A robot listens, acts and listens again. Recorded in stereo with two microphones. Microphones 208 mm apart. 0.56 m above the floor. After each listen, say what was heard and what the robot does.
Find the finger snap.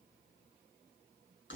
Keep listening.
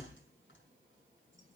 Keep listening.
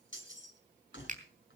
The finger snap: about 40° right or 140° right. Turn 40° right.
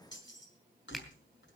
Keep listening.
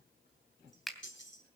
Facing the finger snap, 2 to 4 m away.